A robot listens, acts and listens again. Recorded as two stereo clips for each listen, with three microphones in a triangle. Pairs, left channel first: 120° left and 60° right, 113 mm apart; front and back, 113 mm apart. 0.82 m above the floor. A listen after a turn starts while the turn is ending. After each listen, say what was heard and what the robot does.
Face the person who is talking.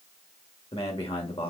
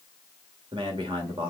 The man speaking: 140° left. Turn 140° left.
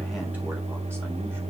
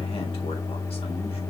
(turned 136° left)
Keep listening.
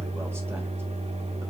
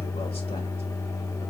Keep listening.
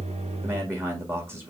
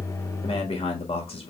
Facing the man speaking, 1 to 2 m away.